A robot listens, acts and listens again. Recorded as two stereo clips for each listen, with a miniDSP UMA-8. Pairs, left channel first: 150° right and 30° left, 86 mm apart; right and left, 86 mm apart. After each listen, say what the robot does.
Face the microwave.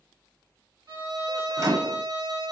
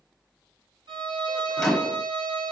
Found it: a microwave, straight ahead.